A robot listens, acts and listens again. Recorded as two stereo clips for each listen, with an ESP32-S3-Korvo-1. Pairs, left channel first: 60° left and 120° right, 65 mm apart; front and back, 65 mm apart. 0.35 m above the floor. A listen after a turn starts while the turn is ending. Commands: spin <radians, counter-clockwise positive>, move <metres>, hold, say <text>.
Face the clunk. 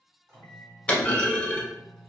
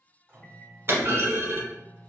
spin 2.27
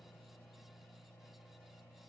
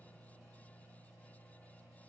say I heard a clunk from this way, but can't make it out now.